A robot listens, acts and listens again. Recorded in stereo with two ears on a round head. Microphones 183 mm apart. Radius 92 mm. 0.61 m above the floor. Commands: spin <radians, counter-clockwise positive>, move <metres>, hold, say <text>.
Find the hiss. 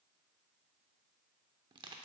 hold
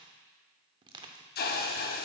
spin 0.79
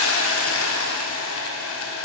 spin 1.48
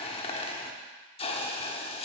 spin 0.52
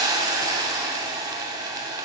spin -0.35
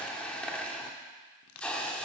say Found it: a hiss, straight ahead.